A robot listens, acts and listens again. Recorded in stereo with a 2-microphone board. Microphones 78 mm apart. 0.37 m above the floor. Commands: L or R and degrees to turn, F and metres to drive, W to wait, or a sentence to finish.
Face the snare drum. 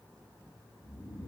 W
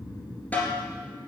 L20
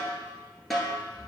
Facing the snare drum.